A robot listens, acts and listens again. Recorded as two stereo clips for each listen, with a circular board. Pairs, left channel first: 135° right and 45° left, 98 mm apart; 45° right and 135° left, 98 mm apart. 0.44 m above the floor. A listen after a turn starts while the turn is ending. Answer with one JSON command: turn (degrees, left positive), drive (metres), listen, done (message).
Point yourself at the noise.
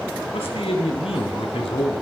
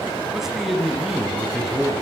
{"turn": -140}
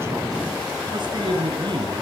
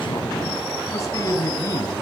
{"turn": 10}
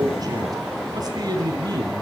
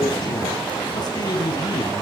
{"done": "Found it: a man speaking, straight ahead."}